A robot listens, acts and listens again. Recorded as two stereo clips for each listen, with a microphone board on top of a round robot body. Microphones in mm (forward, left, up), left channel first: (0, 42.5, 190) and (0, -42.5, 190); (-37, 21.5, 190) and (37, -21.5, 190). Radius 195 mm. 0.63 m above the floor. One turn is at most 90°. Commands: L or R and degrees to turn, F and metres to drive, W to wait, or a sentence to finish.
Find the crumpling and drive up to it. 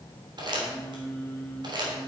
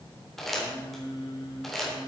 R90
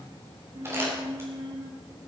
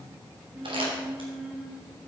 R30
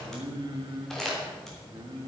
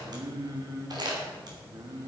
F1.0
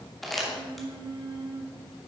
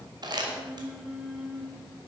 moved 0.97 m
F1.0
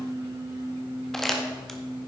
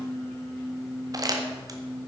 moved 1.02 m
F1.0
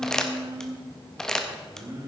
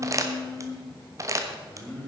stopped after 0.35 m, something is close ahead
L10
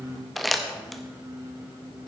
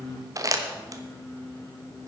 I am next to the crumpling.